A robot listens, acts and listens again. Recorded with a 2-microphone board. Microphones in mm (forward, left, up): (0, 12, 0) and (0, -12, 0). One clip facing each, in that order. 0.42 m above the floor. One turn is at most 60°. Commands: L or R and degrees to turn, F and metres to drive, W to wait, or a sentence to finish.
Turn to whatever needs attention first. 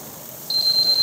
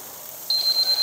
R30
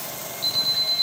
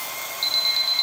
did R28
R60
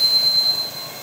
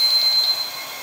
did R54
R60
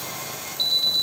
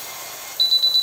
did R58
R30
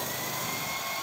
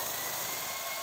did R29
Facing the alarm.